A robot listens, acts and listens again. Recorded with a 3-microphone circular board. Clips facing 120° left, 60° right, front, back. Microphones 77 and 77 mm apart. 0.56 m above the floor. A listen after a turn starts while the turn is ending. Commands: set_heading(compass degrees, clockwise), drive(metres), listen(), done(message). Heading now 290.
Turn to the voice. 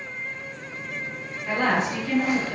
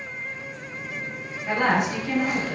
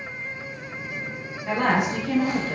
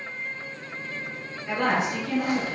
set_heading(265)
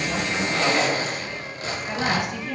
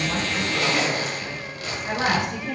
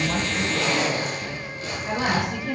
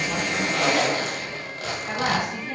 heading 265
set_heading(275)
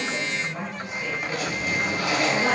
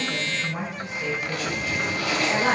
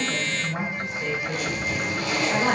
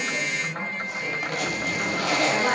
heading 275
done("Facing the woman speaking.")